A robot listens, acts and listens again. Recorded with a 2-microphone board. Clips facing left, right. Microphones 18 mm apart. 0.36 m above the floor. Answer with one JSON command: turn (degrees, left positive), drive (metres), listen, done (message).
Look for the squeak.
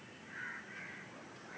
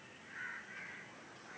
{"listen": true}
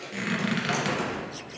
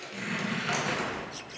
{"turn": 45}
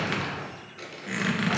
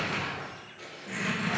{"turn": 85}
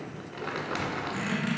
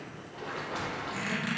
{"done": "Facing the squeak."}